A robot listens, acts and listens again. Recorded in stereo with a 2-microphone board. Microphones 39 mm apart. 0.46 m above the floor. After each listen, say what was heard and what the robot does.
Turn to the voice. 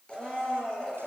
Keep listening.
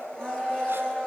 Keep listening.
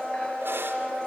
I can't make out anyone speaking, only a blender.